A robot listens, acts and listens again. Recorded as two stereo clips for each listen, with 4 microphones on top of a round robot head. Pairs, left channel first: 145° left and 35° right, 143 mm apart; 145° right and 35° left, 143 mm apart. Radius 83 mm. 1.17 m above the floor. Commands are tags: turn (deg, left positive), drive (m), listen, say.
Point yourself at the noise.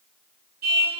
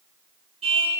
<turn deg="-15"/>
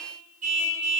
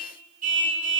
<say>Found it: a car horn, straight ahead, over 4 m away.</say>